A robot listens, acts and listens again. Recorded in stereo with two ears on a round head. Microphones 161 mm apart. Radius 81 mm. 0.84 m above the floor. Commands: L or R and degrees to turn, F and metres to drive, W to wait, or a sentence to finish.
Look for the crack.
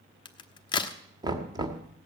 L25
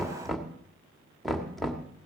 W
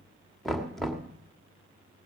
I heard a crack, but can't make it out now. It was about straight ahead or 130° left.